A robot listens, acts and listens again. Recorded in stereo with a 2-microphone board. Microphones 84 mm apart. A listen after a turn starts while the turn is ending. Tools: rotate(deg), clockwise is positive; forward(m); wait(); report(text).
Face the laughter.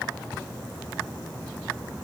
wait()
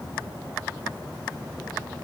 wait()
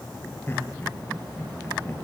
rotate(-30)
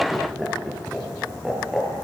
report("Facing the laughter.")